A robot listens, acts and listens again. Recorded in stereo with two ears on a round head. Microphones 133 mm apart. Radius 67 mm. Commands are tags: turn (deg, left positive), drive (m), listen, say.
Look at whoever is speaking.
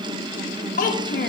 <turn deg="55"/>
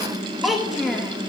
<say>Found it: a child speaking, straight ahead.</say>